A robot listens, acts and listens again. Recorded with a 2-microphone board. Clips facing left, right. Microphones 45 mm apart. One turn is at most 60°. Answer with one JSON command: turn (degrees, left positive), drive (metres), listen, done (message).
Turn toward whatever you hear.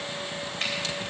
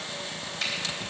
{"turn": 45}
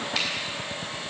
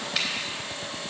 {"listen": true}
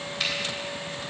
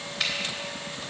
{"done": "Facing the finger snap."}